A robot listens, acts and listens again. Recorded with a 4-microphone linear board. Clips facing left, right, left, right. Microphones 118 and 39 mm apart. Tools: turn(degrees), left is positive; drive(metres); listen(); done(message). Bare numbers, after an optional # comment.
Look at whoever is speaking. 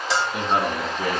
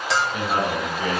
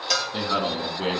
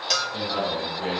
# The man speaking: about 45° left or 135° left.
turn(45)
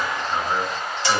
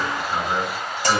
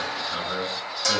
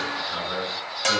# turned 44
done("Facing the man speaking, 2 to 4 m away.")